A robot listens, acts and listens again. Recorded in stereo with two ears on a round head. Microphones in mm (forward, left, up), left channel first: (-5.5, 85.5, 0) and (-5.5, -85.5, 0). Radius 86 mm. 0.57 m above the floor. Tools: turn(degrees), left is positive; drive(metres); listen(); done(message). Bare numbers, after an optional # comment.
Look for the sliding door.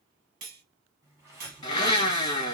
turn(-30)
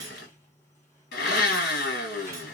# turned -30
# So it is at 15° left.
turn(15)
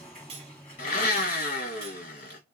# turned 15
done("Found it: a sliding door, straight ahead, 2 to 4 m away.")